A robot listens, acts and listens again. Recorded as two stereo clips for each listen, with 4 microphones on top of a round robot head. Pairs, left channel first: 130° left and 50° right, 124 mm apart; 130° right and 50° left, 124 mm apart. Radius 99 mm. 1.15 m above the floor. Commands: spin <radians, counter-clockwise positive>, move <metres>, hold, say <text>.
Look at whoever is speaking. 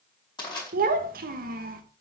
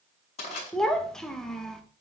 spin -0.79
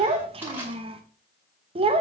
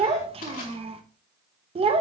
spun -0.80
say Facing the child speaking, under 1 m away.